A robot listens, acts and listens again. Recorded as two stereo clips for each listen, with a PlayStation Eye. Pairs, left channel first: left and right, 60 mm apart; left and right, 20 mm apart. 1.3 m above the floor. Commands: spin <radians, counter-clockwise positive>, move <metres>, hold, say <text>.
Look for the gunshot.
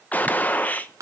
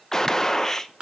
spin 0.44
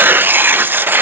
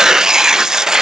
hold
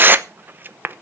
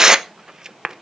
say I heard a gunshot, but can't make it out now. It was about straight ahead or 130° left.